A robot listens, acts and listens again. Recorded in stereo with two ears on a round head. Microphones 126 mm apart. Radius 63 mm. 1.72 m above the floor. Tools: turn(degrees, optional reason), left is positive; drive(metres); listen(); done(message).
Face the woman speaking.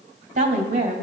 turn(degrees=-55, reason="The woman speaking: about 55° right or 125° right.")
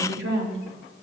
turn(degrees=-80, reason="So it is at 80° right.")
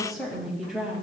turn(degrees=-10, reason="The woman speaking is now 10° right.")
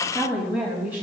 turn(degrees=-15, reason="The woman speaking is now 15° right.")
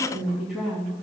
done("Facing the woman speaking, 2 to 4 m away.")